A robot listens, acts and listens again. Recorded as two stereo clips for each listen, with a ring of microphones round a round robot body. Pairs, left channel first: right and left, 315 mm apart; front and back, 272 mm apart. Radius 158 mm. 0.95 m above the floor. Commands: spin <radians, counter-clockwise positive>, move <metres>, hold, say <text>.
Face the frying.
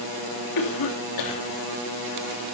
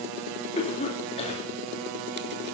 hold
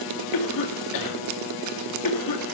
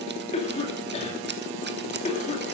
hold
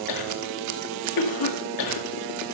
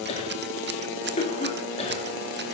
say I can't make out frying to turn to.